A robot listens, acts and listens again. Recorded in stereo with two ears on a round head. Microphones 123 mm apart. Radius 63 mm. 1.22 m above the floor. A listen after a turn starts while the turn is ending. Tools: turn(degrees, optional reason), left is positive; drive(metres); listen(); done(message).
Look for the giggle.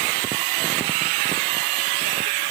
listen()
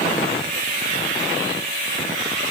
listen()
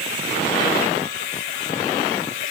done("I can't make out a giggle to turn to.")